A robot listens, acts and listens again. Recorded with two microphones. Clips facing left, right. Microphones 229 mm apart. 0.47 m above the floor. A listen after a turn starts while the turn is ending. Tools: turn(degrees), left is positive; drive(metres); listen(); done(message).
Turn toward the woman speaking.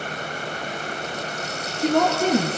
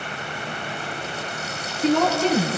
turn(degrees=50)
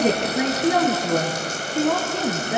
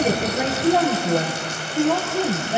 turn(degrees=80)
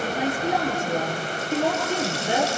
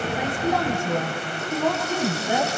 turn(degrees=20)
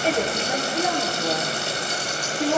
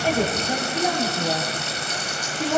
done("Found it: a woman speaking, straight ahead.")